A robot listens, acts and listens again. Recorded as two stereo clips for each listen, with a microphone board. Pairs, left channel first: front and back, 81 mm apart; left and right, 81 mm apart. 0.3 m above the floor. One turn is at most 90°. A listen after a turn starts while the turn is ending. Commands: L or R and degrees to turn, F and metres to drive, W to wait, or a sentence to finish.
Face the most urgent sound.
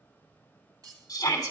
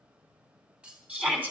R25
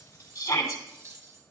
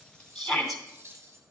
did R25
Facing the shout, 2 to 4 m away.